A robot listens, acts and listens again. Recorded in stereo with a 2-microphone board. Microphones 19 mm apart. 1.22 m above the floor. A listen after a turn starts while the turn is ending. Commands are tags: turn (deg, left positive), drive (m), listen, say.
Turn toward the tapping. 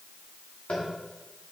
<turn deg="90"/>
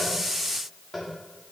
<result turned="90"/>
<say>Found it: tapping, straight ahead.</say>